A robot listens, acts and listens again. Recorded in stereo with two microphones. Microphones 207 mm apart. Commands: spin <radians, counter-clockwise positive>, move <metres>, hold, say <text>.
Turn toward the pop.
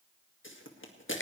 spin 1.22
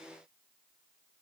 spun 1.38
hold
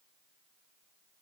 say I heard a pop, but can't make it out now. It was about 10° right or 30° left.